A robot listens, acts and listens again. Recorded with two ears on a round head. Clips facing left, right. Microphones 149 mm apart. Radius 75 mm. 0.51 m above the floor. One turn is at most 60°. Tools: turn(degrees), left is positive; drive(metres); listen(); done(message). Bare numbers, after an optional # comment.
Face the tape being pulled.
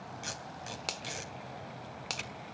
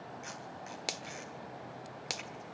# The tape being pulled: about 45° left or 135° left.
turn(45)
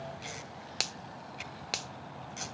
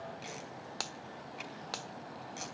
done("Facing the tape being pulled, 2 to 4 m away.")